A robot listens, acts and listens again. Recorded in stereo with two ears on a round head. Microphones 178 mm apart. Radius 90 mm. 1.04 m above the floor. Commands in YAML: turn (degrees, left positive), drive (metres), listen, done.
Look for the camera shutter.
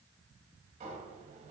listen: true
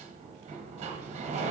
listen: true
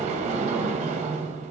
done: "I can't make out a camera shutter to turn to."